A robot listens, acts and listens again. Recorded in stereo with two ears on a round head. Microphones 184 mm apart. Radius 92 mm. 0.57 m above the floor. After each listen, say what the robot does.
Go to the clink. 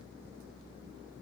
Keep listening.
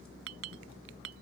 Turn 70° right.
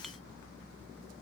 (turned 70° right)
Keep listening.
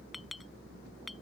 Drive 1.0 m forward.
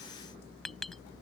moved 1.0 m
Drive 1.0 m forward.
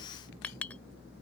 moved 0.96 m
Drive 1.0 m forward.
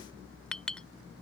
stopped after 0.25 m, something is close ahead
I am next to the clink.